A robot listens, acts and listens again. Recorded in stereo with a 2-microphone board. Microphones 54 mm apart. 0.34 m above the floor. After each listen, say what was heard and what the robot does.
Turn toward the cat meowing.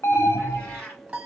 Turn 30° left.
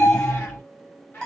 So it is at 145° left. Turn 145° left.
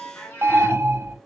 The cat meowing is now 25° left. Turn 25° left.
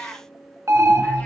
The cat meowing is now 10° left. Turn 10° left.
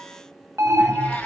Keep listening.
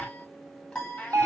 The cat meowing is now 20° left. Turn 20° left.
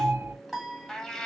Found it: a cat meowing, straight ahead, 1 to 2 m away.